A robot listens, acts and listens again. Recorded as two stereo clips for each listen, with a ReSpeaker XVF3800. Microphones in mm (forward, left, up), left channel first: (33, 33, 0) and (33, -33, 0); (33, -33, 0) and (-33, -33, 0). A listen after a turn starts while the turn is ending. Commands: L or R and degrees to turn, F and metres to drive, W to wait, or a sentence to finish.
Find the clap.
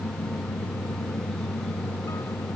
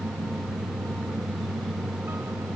W
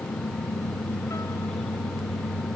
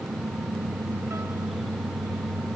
W
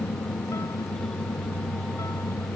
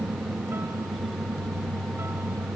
I can't make out a clap to turn to.